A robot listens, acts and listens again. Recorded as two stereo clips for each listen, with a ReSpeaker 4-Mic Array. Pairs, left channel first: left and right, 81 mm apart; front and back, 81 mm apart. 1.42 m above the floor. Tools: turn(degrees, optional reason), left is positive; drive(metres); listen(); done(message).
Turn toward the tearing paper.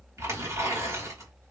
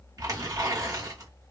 turn(degrees=-140, reason="The tearing paper: 140° right.")
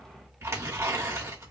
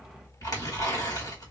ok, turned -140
turn(degrees=-35, reason="The tearing paper is now 35° right.")
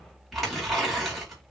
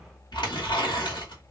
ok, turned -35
done("Facing the tearing paper, 2 to 4 m away.")